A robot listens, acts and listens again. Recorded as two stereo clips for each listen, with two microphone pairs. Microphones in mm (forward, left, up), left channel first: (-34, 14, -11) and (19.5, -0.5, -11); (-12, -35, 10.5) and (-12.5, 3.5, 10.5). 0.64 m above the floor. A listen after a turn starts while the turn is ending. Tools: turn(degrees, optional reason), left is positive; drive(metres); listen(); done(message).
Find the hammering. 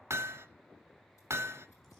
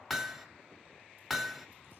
done("Facing the hammering, under 1 m away.")